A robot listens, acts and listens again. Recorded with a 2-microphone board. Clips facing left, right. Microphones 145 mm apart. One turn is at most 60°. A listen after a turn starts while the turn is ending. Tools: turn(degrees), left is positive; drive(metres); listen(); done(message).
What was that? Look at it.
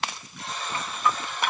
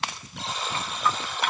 turn(degrees=-60)
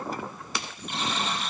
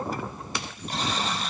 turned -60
turn(degrees=-35)
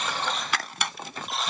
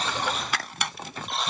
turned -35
done("Facing the buzzer, over 4 m away.")